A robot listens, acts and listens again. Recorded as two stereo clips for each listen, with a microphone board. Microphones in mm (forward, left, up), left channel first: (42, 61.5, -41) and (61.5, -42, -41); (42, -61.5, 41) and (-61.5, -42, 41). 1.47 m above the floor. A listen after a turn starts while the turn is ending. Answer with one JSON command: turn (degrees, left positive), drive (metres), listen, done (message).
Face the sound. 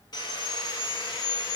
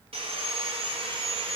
{"turn": 145}
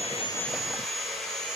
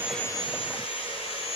{"turn": 10}
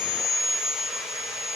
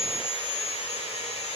{"done": "Found it: sawing, straight ahead."}